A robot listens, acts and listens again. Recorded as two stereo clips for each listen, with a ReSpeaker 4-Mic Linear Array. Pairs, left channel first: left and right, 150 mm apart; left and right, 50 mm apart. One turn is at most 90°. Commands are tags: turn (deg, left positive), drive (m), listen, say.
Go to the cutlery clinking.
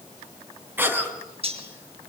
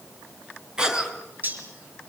<turn deg="-40"/>
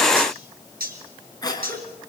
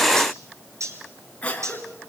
<turn deg="-90"/>
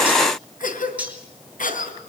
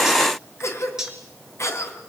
<turn deg="-10"/>
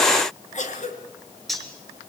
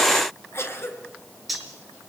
<drive m="1.0"/>
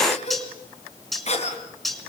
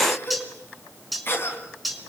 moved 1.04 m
<drive m="1.0"/>
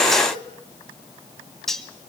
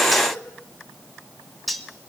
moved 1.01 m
<drive m="1.0"/>
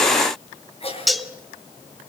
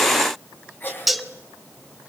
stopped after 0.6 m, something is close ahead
<say>I am next to the cutlery clinking.</say>